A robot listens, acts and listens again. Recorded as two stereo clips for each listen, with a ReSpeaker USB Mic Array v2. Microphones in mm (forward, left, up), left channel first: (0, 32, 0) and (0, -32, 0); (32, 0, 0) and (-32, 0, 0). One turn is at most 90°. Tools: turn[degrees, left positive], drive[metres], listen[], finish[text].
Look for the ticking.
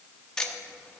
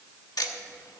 Thought: The ticking: 10° left.
Action: turn[10]
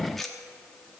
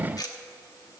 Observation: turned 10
Action: finish[Facing the ticking.]